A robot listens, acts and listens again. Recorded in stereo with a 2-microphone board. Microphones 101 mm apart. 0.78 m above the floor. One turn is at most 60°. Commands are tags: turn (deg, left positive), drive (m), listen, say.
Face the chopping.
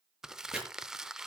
<turn deg="-30"/>
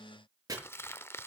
<turn deg="-60"/>
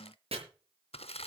<turn deg="-60"/>
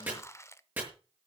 <turn deg="-20"/>
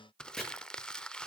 <say>Facing the chopping.</say>